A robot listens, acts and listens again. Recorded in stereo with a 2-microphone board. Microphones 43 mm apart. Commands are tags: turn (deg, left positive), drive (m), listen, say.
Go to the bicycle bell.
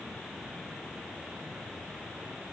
<listen/>
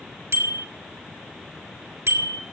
<turn deg="-90"/>
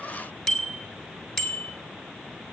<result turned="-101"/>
<drive m="1.0"/>
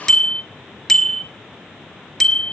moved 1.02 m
<turn deg="10"/>
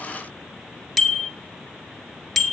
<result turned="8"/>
<drive m="1.0"/>
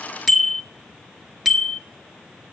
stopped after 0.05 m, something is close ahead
<say>Arrived at the bicycle bell, straight ahead.</say>